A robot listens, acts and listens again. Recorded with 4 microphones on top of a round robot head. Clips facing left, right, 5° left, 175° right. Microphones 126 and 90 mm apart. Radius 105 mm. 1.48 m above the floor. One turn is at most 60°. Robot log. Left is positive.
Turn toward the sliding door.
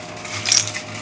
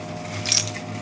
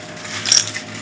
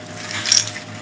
cmd idle
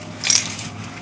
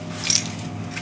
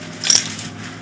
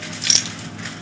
cmd idle
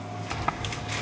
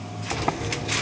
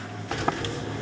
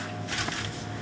note: The sliding door: 45° right.
cmd yaw -45
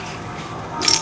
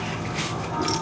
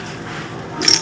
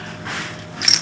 end: Found it: a sliding door, straight ahead.